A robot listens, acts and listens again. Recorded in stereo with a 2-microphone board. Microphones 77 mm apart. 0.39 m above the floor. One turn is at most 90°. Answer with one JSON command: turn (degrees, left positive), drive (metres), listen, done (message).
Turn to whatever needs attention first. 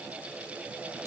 {"listen": true}
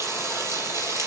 {"listen": true}
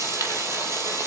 {"done": "I can't make out anything urgent, only frying."}